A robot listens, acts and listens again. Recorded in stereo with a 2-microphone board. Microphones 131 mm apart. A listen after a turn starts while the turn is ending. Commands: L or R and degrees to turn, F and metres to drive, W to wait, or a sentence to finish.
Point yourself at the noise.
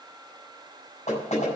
L60
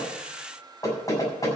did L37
L25
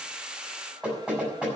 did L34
Found it: knocking, straight ahead, over 4 m away.